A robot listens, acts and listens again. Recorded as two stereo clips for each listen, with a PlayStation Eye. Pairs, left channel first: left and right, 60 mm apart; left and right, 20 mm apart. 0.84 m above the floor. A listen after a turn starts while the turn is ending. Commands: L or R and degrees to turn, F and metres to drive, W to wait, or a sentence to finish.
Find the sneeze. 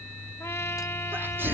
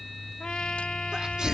R35
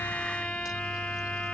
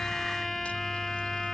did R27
W
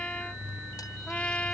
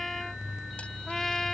I heard a sneeze, but can't make it out now. It was about 10° right or 120° right.